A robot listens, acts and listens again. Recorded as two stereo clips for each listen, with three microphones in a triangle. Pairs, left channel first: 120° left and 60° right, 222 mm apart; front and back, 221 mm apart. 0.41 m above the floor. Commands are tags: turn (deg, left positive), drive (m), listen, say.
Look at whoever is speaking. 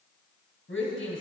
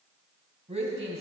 <turn deg="125"/>
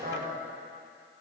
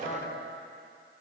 <turn deg="-25"/>
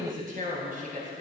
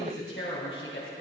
<turn deg="-15"/>
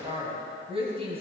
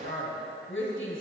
<say>Found it: a woman speaking, straight ahead.</say>